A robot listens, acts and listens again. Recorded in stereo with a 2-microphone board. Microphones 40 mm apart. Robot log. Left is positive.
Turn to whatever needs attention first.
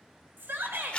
note: The shout: about 60° right or 120° right.
cmd yaw -60
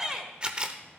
note: So it is at 20° right.
cmd yaw -20
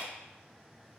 cmd idle
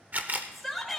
end: Found it: a shout, straight ahead, 1 to 2 m away.